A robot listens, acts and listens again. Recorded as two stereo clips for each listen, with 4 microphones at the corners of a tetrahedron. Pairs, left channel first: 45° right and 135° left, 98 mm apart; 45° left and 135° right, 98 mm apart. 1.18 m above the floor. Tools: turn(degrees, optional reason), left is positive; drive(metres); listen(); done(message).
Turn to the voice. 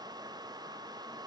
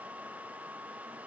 listen()
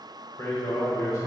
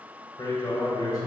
done("Found it: a man speaking, straight ahead, 1 to 2 m away.")